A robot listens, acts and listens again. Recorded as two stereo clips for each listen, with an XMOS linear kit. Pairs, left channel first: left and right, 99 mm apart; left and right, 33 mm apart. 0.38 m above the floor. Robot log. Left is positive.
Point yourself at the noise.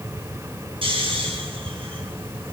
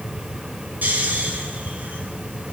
note: The snoring: about 65° right or 115° right.
cmd yaw -65
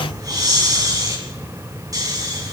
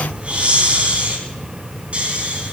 note: So it is at 40° right.
cmd yaw -40
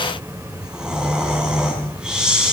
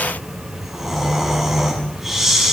note: The snoring is now 10° right.
cmd yaw -10
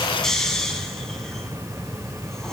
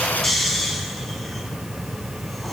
end: Facing the snoring.